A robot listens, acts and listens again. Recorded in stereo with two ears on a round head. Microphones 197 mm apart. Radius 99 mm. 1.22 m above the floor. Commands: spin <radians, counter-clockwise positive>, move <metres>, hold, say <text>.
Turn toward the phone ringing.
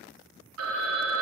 spin -1.57
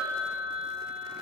say Found it: a phone ringing, straight ahead.